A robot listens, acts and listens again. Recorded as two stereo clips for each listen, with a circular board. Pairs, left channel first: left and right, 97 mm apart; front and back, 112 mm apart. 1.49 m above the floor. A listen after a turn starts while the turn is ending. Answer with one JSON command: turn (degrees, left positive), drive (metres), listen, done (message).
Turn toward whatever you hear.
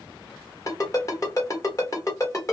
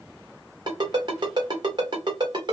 {"turn": 140}
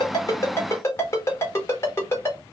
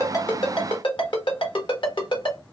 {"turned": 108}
{"turn": 35}
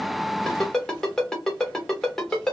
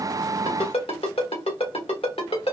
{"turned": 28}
{"done": "Found it: a ringtone, straight ahead, 1 to 2 m away."}